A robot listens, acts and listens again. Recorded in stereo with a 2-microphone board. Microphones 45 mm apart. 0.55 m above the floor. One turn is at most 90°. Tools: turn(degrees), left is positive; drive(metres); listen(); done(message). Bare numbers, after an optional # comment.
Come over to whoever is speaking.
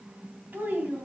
# The child speaking: about 45° right or 135° right.
turn(-45)
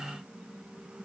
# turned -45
listen()
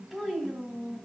drive(1.0)
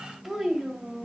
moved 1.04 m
drive(1.0)
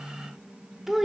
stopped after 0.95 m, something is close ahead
# The child speaking is now 10° right.
turn(-10)
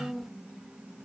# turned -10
done("Arrived at the child speaking, straight ahead.")